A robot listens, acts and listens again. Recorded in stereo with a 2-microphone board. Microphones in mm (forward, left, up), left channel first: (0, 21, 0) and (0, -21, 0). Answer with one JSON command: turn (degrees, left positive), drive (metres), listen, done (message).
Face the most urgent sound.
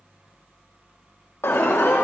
{"turn": 90}
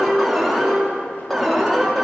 {"done": "Facing the alarm, 2 to 4 m away."}